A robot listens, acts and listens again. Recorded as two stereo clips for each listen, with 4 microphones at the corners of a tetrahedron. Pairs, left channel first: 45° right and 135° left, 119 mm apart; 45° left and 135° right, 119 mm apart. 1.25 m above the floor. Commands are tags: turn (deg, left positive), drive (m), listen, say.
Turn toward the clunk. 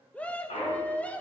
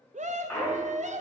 <turn deg="-35"/>
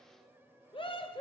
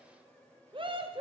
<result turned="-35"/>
<say>I heard a clunk from this way, but can't make it out now.</say>